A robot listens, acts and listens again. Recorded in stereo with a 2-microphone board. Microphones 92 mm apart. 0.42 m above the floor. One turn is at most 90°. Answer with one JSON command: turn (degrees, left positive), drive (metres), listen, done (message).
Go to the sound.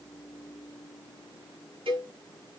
{"turn": -70}
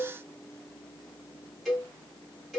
{"drive": 1.0}
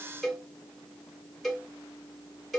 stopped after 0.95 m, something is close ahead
{"done": "Arrived at the cowbell, straight ahead."}